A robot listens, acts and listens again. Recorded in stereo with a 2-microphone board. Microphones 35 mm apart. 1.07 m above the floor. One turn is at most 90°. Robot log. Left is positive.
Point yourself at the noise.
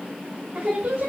note: The singing: about 40° right or 140° right.
cmd yaw -40
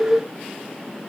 note: So it is at 10° right.
cmd yaw -10
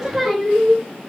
end: Facing the singing, 1 to 2 m away.